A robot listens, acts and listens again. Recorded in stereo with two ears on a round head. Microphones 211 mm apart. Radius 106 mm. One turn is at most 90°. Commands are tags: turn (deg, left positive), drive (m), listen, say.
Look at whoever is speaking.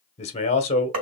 <turn deg="30"/>
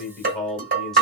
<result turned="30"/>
<say>Facing the man speaking, 1 to 2 m away.</say>